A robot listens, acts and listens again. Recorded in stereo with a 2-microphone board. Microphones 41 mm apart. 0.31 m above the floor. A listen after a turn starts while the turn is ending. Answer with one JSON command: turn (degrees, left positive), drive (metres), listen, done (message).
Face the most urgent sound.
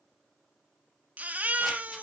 {"turn": -40}
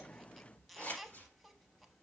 {"done": "Found it: a baby crying, straight ahead, under 1 m away."}